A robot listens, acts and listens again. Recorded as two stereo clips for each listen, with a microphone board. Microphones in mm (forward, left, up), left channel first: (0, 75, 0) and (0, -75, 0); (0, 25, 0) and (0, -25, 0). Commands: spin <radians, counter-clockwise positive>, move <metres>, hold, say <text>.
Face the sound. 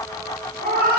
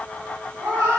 spin -1.22
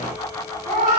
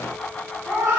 spin -0.96
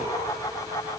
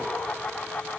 hold
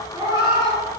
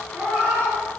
spin -0.52
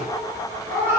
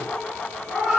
spin -0.26
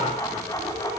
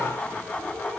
hold
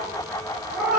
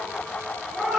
say Facing the cat meowing.